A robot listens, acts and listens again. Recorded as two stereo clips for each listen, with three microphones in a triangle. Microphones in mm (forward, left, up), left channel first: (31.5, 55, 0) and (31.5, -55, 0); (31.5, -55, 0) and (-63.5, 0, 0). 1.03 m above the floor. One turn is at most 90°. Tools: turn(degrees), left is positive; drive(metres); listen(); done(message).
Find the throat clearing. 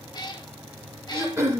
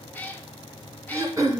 turn(degrees=-90)
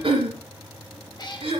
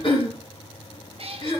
turn(degrees=-60)
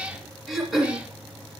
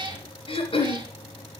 done("Found it: throat clearing, straight ahead, 2 to 4 m away.")